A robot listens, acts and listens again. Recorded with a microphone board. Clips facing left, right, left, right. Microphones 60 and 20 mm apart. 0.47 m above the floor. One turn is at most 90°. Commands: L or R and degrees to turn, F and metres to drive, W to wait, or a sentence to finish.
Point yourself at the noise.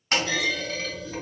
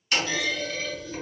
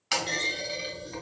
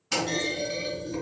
L55
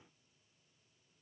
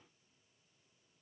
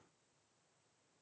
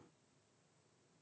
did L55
W
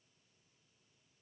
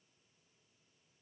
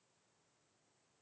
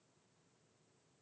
I heard a clunk, but can't make it out now. It was about straight ahead or 70° left.